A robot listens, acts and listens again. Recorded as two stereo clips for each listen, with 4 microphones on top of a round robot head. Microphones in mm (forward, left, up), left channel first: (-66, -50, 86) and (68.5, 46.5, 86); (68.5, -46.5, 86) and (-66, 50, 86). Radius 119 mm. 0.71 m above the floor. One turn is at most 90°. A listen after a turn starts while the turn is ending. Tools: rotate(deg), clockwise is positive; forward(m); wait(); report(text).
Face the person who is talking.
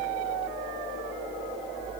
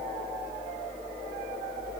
wait()
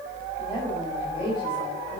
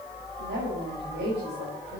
rotate(-90)
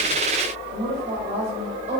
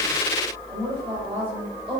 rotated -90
rotate(-85)
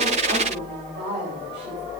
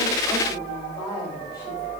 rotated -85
rotate(-35)
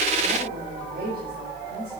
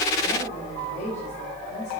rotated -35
rotate(-10)
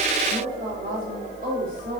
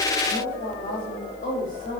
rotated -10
report("Found it: a woman speaking, straight ahead, over 4 m away.")